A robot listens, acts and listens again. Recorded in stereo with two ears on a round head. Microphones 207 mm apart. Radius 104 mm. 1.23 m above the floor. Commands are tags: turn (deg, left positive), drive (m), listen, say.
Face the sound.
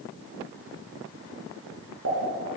<turn deg="-50"/>
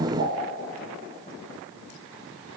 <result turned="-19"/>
<listen/>
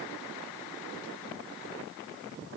<say>I heard a pop, but can't make it out now. It was about 35° right or 110° right.</say>